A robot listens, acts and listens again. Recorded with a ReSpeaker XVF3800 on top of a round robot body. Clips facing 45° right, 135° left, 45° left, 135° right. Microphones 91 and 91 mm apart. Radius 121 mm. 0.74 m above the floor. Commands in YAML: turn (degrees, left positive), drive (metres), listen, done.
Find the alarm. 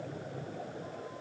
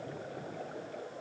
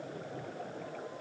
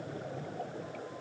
listen: true
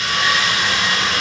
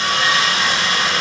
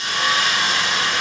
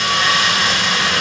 listen: true
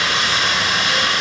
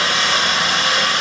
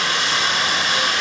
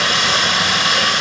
done: "I can't make out an alarm, only sawing."